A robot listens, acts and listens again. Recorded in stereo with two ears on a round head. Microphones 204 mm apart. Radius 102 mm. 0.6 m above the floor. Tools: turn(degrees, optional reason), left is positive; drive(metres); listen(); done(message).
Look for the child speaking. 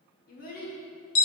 turn(degrees=40, reason="The child speaking: about 40° left or 140° left.")
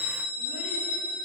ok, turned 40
listen()
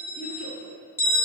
listen()
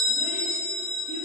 done("I heard a child speaking, but can't make it out now. It was about straight ahead or 100° left.")